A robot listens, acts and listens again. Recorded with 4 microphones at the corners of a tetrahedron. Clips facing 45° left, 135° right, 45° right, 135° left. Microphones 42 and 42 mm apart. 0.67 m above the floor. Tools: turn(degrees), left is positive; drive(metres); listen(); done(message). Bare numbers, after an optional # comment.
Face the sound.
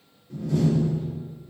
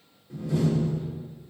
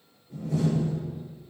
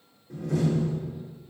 # The door slam: 140° left.
turn(140)
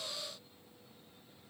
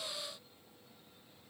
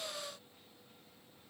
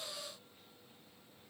done("Facing where the door slam came from. I can't hear it now.")